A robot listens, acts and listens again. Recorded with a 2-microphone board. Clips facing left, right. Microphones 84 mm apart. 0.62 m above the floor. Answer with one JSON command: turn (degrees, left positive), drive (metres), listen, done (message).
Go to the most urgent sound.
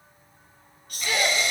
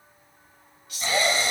{"turn": 50}
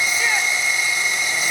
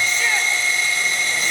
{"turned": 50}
{"listen": true}
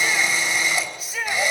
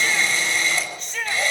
{"turn": 10}
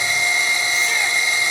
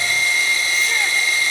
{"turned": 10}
{"listen": true}
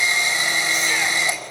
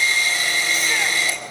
{"listen": true}
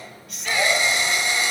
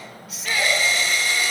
{"drive": 1.0}
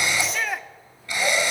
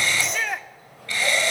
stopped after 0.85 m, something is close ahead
{"done": "I am next to the shout."}